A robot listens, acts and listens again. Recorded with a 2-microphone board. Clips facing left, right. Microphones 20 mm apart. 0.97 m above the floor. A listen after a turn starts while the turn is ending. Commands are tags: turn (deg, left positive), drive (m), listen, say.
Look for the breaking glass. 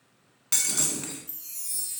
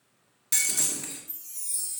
<turn deg="25"/>
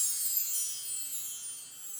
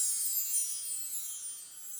<listen/>
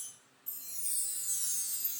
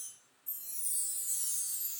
<say>I heard breaking glass, but can't make it out now. It was about straight ahead or 130° left.</say>